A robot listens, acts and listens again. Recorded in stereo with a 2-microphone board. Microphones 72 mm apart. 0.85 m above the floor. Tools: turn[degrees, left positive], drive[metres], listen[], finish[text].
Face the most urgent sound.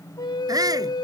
Thought: The shout: about 60° right or 120° right.
Action: turn[-60]
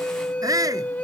Thought: So it is at 60° right.
Action: turn[-60]
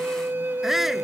Action: finish[Facing the shout.]